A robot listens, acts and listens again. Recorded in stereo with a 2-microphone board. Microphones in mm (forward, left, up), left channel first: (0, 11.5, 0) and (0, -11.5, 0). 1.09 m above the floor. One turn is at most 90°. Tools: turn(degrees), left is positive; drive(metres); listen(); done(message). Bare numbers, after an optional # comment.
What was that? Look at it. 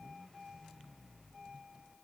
listen()
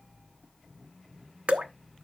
# The dripping: about 65° right or 115° right.
turn(-65)
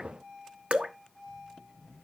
# So it is at 50° right.
turn(-50)
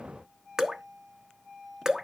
# The dripping is now 25° right.
turn(-25)
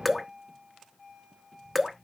done("Found it: dripping, straight ahead, 1 to 2 m away.")